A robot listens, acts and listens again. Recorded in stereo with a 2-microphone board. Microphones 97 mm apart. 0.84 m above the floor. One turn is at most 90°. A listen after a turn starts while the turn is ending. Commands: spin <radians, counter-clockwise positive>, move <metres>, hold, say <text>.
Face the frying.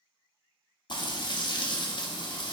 spin 0.87
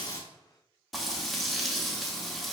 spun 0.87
say Facing the frying.